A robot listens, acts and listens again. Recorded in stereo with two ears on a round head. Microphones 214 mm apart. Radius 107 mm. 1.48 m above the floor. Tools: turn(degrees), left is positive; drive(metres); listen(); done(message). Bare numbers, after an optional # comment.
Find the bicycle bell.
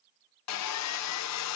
listen()
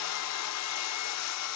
listen()
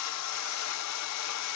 done("I can't make out a bicycle bell to turn to.")